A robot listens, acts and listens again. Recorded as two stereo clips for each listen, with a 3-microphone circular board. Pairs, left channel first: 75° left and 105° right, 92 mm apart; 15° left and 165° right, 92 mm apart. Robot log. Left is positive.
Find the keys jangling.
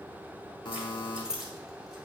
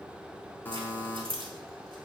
note: The keys jangling: 175° left.
cmd yaw +175
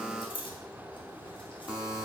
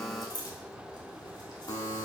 note: The keys jangling is now 55° left.
cmd yaw +55
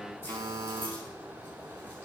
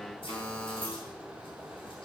cmd idle
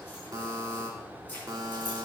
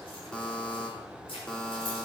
end: Found it: keys jangling, straight ahead, over 4 m away.